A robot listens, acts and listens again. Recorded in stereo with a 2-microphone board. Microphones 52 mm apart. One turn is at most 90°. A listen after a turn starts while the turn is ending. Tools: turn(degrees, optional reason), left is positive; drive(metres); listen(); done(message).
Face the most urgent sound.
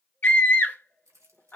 turn(degrees=35, reason="The scream: about 35° left or 145° left.")
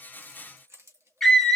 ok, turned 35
done("Facing the scream.")